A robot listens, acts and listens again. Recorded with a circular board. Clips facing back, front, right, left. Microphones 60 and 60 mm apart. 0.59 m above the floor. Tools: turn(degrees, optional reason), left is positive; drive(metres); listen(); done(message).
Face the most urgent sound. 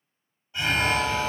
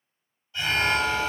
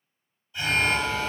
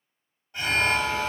turn(degrees=120, reason="The alarm: 120° left.")
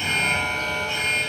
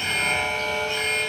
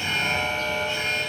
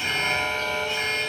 turn(degrees=40, reason="The alarm is now 40° left.")
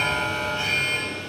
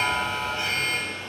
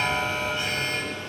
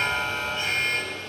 done("Facing the alarm.")